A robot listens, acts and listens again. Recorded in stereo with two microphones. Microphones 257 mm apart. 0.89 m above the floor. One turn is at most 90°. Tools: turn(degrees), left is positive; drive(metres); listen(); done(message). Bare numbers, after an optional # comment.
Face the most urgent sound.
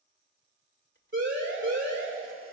# The siren: about 50° right or 130° right.
turn(-50)
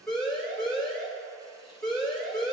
done("Facing the siren, 2 to 4 m away.")